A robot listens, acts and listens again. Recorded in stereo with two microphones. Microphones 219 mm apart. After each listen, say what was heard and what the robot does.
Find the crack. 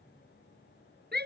Keep listening.
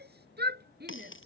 The crack: about 65° left or 115° left. Turn 65° left.
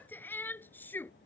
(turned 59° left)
Keep listening.
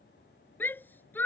I heard a crack, but can't make it out now. It was about 5° left or 55° left.